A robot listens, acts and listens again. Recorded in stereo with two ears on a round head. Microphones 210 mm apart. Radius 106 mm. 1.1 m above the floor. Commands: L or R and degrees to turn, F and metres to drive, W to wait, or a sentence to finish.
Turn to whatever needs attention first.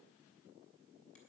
W
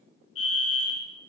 L65
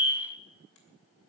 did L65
L30
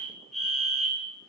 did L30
Facing the fire alarm, 2 to 4 m away.